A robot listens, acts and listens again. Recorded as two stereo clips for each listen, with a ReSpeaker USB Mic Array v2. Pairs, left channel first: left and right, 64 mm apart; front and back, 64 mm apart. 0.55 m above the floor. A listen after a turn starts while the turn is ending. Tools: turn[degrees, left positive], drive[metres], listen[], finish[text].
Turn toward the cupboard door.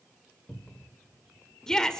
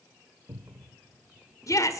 Thought: The cupboard door: 160° left.
Action: turn[160]
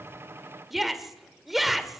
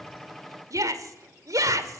Action: listen[]
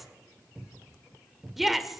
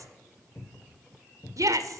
Thought: The cupboard door is now 25° right.
Action: turn[-25]
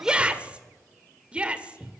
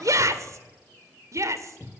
Thought: The cupboard door is now 10° right.
Action: turn[-10]
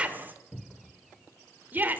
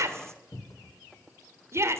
Action: finish[Found it: a cupboard door, straight ahead, 1 to 2 m away.]